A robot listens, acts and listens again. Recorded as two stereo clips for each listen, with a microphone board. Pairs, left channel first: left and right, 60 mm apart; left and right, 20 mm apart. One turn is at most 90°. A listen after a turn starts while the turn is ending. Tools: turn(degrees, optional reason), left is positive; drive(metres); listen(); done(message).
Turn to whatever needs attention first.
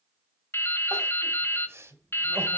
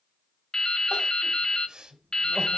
turn(degrees=-45, reason="The crying: about 45° right or 135° right.")
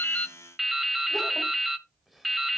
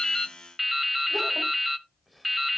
listen()
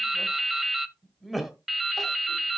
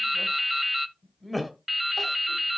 done("Facing the crying, 1 to 2 m away.")